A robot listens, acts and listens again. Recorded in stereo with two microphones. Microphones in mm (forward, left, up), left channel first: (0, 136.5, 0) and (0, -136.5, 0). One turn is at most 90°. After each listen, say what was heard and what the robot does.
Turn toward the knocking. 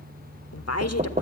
The knocking: about 30° right or 150° right. Turn 30° right.
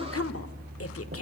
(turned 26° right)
Keep listening.
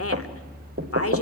So it is at 125° right. Turn 90° right.
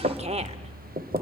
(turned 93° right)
The knocking is now 30° right. Turn 30° right.
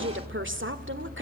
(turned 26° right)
Keep listening.
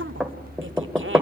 Found it: knocking, straight ahead, 1 to 2 m away.